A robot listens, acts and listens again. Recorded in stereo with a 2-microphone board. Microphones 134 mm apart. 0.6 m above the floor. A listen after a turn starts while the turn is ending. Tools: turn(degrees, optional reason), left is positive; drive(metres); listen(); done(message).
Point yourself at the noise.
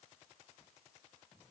listen()
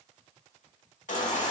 turn(degrees=65, reason="The baby crying: about 65° left or 115° left.")
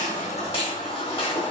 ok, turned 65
turn(degrees=40, reason="So it is at 40° left.")
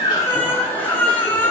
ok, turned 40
turn(degrees=15, reason="The baby crying is now 15° left.")
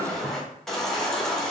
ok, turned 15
done("Found it: a baby crying, straight ahead.")